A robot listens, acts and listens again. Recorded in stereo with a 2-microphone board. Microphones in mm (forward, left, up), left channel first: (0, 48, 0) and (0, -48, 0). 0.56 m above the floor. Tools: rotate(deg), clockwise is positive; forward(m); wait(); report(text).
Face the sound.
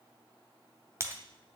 rotate(30)
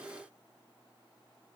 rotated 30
wait()
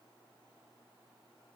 report("I heard breaking glass, but can't make it out now. It was about straight ahead or 120° right.")